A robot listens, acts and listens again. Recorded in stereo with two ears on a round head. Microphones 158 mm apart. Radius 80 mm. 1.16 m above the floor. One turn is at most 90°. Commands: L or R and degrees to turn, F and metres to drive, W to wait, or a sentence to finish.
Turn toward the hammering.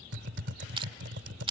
W
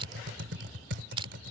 W
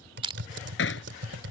L70
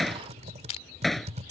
Found it: hammering, straight ahead.